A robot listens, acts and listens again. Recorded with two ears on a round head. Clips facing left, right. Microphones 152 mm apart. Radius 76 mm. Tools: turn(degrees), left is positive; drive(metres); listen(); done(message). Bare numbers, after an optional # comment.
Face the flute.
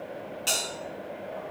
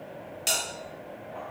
listen()
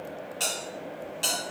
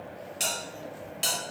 listen()
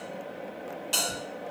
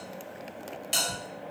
done("I can't make out a flute, only a bell.")